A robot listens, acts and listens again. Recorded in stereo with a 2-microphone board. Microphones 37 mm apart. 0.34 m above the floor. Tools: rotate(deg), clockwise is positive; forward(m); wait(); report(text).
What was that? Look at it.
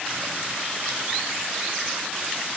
wait()
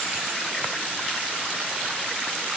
wait()
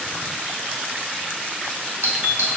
rotate(55)
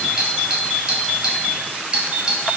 rotate(20)
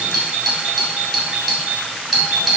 report("Facing the doorbell.")